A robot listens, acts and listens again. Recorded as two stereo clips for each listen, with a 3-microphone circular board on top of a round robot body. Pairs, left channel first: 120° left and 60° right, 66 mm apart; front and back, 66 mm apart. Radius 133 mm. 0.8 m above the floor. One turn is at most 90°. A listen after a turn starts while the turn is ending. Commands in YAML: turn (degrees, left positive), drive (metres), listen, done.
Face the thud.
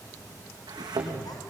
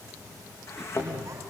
turn: -50
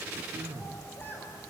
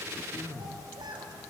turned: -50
done: "I heard a thud from this way, but can't make it out now."